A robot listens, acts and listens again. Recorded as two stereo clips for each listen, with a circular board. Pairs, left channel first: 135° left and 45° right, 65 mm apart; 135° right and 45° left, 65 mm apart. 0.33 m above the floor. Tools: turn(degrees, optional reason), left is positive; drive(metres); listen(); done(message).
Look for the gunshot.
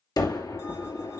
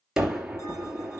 turn(degrees=130, reason="The gunshot: 130° left.")
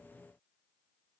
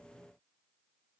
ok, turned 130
done("Facing where the gunshot came from. I can't hear it now.")